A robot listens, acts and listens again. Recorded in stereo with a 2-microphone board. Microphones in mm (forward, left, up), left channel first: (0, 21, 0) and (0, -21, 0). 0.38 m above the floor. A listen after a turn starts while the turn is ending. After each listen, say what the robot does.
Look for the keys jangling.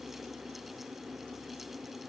Keep listening.
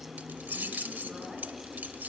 Turn 45° right.
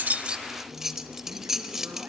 Turn 10° right.
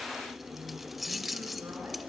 Found it: keys jangling, straight ahead.